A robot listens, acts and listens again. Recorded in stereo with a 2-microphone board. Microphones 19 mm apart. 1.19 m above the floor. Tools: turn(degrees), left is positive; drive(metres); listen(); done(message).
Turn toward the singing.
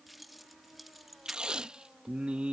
turn(degrees=-70)
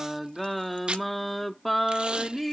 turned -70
turn(degrees=15)
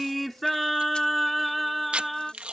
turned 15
turn(degrees=10)
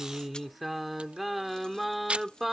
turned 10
done("Facing the singing.")